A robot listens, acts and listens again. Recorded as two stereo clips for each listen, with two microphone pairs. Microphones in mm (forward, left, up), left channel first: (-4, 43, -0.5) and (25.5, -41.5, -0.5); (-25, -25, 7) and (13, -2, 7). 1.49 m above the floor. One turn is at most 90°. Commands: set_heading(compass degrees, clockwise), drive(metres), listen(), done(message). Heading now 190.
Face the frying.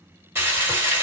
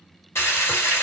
set_heading(280)
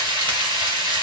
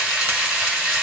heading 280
set_heading(325)
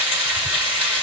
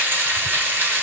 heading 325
done("Found it: frying, straight ahead.")